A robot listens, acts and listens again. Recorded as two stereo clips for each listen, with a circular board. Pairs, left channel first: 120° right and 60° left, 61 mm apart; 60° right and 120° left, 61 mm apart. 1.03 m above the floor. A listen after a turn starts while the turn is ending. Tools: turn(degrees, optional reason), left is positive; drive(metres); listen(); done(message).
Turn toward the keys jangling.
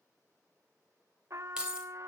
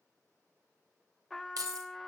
turn(degrees=135, reason="The keys jangling: 135° left.")
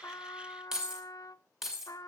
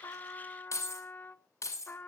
turn(degrees=-25, reason="The keys jangling is now 25° right.")
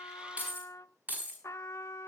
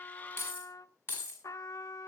done("Found it: keys jangling, straight ahead, over 4 m away.")